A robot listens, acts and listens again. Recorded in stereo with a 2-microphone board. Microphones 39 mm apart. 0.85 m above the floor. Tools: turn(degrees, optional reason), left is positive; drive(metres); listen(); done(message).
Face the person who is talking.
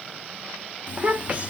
turn(degrees=-30, reason="The child speaking: about 30° right or 150° right.")
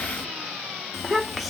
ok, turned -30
done("Facing the child speaking, under 1 m away.")